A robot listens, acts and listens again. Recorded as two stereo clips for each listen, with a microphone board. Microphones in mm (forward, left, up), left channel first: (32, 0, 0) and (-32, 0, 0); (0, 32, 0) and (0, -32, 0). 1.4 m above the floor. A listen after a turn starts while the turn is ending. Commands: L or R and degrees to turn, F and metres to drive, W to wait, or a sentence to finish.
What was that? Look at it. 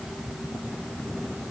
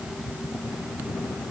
W
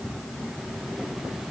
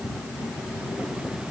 W
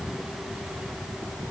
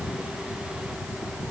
I can't make out anything to turn to.